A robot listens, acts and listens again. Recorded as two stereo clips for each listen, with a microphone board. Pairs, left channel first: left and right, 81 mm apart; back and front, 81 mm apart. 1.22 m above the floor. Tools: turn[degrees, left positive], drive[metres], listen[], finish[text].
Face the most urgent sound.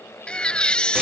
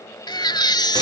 Thought: The baby crying: 165° left.
Action: turn[165]
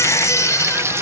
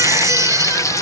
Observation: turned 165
Thought: The baby crying is now 45° left.
Action: turn[45]
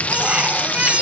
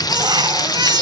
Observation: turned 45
Thought: The baby crying is now 15° right.
Action: turn[-15]
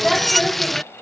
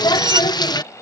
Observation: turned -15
Action: finish[Facing the baby crying.]